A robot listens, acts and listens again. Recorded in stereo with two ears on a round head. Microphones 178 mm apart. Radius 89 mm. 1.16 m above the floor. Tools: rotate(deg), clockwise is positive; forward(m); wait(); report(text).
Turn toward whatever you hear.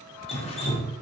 rotate(-30)
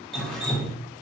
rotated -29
report("Facing the dripping, under 1 m away.")